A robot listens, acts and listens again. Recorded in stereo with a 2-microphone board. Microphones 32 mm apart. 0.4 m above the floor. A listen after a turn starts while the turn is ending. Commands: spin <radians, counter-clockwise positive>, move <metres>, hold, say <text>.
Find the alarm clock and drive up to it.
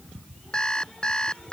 spin 0.44
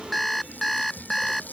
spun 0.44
move 1.0
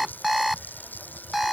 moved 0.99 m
move 1.0
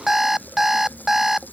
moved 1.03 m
spin -0.26
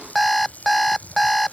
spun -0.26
move 1.0
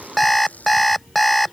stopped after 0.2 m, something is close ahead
say I am next to the alarm clock.